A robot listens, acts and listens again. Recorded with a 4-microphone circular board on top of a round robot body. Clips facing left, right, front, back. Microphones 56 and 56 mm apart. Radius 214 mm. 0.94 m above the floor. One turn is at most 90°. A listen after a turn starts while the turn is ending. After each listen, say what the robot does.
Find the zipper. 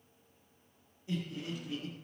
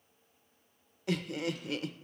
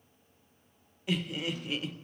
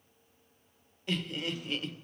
Keep listening.
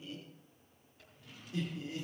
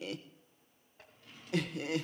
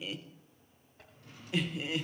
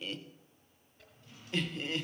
Turn 40° right.
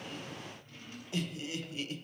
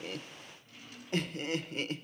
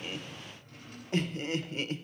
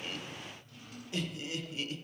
Keep listening.
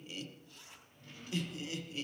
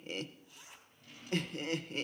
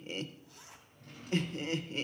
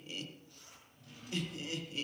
Facing the zipper.